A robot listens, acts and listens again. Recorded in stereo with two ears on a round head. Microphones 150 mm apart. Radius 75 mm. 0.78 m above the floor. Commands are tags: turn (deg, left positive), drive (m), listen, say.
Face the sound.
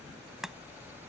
<turn deg="30"/>
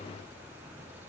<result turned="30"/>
<listen/>
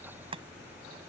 <turn deg="-35"/>
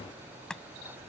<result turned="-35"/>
<say>Found it: chopping, straight ahead.</say>